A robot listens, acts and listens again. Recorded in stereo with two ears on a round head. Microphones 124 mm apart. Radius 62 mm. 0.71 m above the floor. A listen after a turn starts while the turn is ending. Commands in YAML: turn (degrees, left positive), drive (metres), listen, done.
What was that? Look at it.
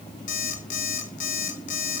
turn: 65
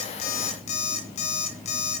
turn: 50
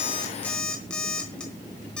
done: "Facing the alarm clock."